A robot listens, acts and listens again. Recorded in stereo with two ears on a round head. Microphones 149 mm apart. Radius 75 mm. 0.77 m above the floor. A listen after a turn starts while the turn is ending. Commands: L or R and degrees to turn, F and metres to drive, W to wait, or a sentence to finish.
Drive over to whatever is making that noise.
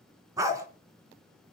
R20
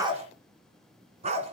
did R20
R140
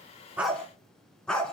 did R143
F1.0
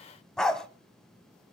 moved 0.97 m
F1.0
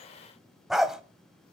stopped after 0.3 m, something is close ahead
Arrived at the dog barking, straight ahead.